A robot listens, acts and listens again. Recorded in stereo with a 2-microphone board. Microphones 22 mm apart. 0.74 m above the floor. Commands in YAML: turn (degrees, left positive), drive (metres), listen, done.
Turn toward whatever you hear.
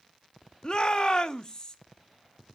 turn: 30
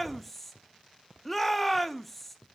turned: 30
done: "Found it: a shout, straight ahead."